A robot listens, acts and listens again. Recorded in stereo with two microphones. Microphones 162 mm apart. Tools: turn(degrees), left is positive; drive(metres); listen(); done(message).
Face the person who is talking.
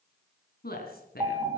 turn(degrees=70)
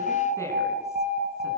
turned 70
listen()
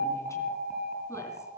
listen()
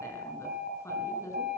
turn(degrees=20)
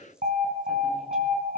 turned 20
listen()
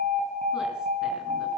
listen()
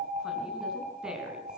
done("Found it: a woman speaking, straight ahead.")